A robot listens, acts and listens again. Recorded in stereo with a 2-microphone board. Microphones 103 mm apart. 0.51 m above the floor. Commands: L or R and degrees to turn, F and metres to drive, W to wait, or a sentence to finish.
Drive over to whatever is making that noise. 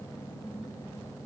W
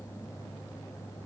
W
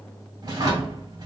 R45
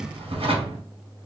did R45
R90
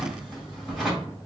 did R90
F1.0
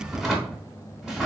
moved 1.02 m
F1.0
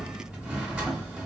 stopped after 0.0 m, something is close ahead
R10
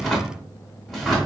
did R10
Arrived at the drawer, straight ahead.